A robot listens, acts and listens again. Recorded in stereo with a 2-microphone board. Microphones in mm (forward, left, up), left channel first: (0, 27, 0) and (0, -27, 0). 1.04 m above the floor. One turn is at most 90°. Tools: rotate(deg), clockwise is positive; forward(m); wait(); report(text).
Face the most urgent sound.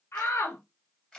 rotate(-60)
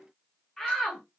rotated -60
rotate(-10)
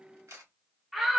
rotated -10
report("Facing the shout, 1 to 2 m away.")